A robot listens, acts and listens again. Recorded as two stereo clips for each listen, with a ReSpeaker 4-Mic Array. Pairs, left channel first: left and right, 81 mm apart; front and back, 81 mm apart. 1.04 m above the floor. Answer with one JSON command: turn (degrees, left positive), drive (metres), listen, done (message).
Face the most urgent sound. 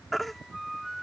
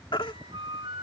{"done": "Facing the baby crying."}